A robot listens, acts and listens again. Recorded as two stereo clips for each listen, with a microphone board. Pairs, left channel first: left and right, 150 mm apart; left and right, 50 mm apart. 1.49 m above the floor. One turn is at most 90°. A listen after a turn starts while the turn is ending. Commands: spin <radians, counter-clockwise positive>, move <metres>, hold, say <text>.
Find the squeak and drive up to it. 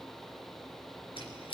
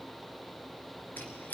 spin 0.61
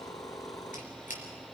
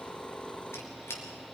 spin 1.57
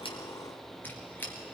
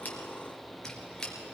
spin 0.26
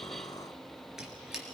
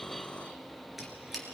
move 1.0
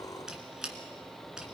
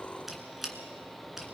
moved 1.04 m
move 1.0
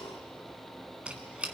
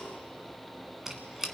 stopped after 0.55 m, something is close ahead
spin -0.17
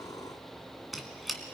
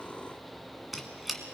say Arrived at the squeak, straight ahead.